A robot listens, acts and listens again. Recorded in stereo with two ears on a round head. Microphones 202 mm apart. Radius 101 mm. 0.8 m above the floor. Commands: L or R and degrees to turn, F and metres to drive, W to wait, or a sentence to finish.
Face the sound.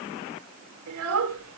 R65
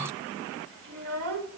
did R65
R65
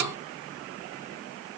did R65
W
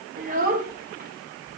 R40
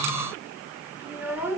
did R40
R10
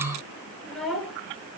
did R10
Facing the child speaking.